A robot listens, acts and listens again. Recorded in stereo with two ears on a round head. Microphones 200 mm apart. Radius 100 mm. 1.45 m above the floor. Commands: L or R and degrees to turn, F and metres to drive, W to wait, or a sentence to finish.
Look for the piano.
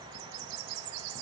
W
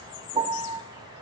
R20
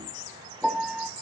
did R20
Found it: a piano, straight ahead.